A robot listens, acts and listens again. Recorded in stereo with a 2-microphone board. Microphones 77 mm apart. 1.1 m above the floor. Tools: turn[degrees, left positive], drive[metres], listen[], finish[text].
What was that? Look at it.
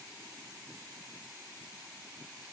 Action: listen[]
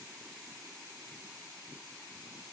Action: listen[]
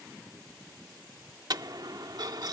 Thought: The dropped coin: about 60° right or 120° right.
Action: turn[-60]
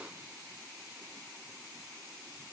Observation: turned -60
Action: listen[]
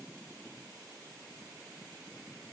Action: finish[I heard a dropped coin, but can't make it out now. It was about straight ahead or 60° right.]